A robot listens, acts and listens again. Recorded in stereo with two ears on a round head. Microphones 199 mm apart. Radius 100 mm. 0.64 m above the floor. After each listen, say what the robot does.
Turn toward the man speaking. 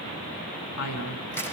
Turn 90° left.
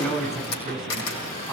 Found it: a man speaking, straight ahead, over 4 m away.